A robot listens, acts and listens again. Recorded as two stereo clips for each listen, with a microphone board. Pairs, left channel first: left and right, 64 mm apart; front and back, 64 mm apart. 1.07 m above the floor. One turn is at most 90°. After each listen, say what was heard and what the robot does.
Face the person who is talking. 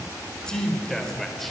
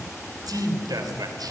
The man speaking: 175° left. Turn 90° left.
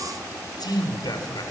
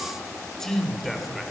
The man speaking is now 90° left. Turn 90° left.
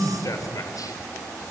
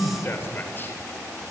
The man speaking is now 55° left. Turn 55° left.
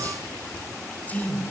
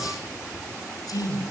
The man speaking is now 25° left. Turn 25° left.
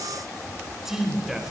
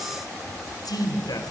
Found it: a man speaking, straight ahead.